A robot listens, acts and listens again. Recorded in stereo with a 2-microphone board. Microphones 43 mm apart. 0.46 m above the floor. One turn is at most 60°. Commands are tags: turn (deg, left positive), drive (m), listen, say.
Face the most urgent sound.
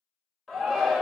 <turn deg="30"/>
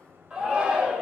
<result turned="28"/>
<turn deg="-25"/>
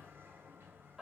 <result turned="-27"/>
<listen/>
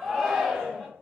<say>Found it: a shout, straight ahead.</say>